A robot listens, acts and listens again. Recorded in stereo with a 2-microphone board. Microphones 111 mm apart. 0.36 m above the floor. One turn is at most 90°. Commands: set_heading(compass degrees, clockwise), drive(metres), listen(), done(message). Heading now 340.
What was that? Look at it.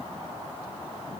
listen()
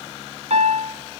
set_heading(40)
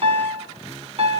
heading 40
set_heading(95)
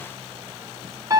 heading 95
set_heading(125)
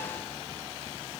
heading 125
listen()
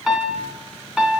done("Found it: a piano, straight ahead.")